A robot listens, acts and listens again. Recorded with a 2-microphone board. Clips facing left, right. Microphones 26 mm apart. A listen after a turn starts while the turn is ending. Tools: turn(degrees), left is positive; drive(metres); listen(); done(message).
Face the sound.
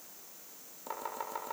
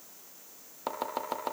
turn(degrees=-50)
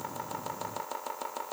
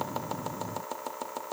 done("Facing the chopping, over 4 m away.")